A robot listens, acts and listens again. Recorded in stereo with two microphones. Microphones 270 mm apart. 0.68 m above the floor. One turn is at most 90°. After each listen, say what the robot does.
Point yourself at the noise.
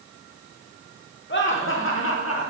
Turn 60° left.
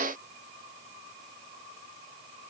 Keep listening.
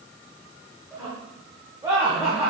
Turn 10° right.
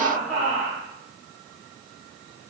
Facing the laughter, 2 to 4 m away.